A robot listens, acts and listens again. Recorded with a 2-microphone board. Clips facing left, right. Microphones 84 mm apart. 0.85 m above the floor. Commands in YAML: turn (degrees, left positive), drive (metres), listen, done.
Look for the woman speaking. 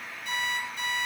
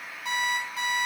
listen: true
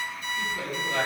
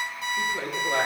turn: -45
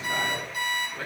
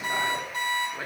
turn: -15
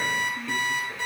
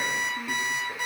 turn: -10
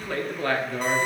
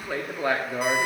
turn: -20
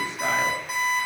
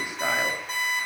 listen: true
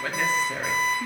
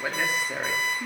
turn: -15
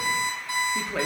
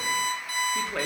done: "Found it: a woman speaking, straight ahead."